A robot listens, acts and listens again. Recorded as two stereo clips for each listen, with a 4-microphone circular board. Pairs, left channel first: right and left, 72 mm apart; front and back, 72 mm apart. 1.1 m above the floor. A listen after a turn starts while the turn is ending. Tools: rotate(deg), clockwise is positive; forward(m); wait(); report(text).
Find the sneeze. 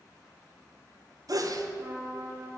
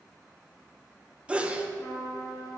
rotate(-110)
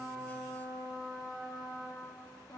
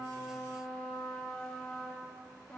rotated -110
report("Facing where the sneeze came from. I can't hear it now.")